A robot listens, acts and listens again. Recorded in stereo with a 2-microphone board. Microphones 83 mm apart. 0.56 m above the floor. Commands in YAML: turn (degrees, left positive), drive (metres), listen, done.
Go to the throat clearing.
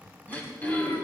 turn: 20
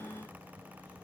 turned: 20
listen: true
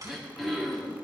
drive: 1.0
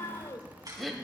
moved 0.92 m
drive: 1.0
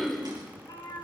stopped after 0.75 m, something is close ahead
done: "I am next to the throat clearing."